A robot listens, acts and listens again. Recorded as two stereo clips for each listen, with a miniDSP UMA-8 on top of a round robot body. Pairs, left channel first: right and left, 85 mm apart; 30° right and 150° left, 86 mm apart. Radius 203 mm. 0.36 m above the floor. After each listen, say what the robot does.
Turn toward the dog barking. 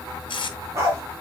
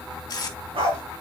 Turn 145° left.
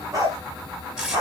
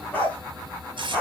Turn 45° left.
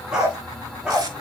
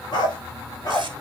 Turn 10° left.
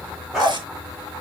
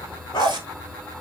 Facing the dog barking, 2 to 4 m away.